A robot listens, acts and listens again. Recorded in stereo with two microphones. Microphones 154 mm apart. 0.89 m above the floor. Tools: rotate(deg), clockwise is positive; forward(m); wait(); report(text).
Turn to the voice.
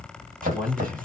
rotate(30)
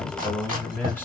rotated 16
rotate(-10)
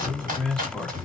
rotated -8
report("Found it: a man speaking, straight ahead, 1 to 2 m away.")